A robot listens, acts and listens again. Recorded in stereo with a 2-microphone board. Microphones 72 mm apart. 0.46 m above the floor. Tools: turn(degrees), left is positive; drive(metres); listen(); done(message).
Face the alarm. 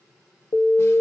turn(degrees=65)
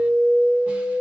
turn(degrees=20)
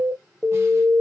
done("Found it: an alarm, straight ahead, under 1 m away.")